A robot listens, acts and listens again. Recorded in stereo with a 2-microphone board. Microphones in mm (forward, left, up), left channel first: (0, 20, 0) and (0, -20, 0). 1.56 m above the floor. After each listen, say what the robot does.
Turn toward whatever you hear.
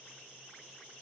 Keep listening.
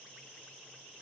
Keep listening.
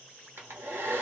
Turn 70° right.
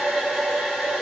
Facing the hair dryer.